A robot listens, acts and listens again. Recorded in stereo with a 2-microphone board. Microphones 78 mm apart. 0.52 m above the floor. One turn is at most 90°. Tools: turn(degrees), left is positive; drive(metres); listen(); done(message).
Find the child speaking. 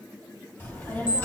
turn(degrees=25)
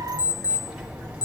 turn(degrees=-15)
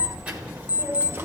turn(degrees=-30)
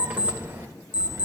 turn(degrees=-40)
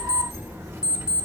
turn(degrees=-25)
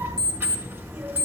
turn(degrees=-20)
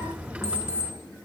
turn(degrees=-10)
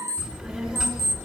done("Found it: a child speaking, straight ahead, 1 to 2 m away.")